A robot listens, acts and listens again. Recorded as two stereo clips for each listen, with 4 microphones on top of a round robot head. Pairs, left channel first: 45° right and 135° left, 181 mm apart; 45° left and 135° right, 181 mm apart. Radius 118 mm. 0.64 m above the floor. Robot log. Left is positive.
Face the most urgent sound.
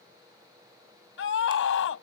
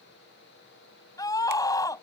note: The scream: 30° right.
cmd yaw -30
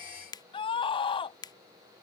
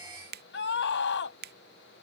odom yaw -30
note: The scream is now 20° left.
cmd yaw +20
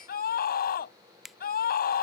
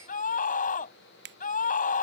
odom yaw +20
end: Facing the scream.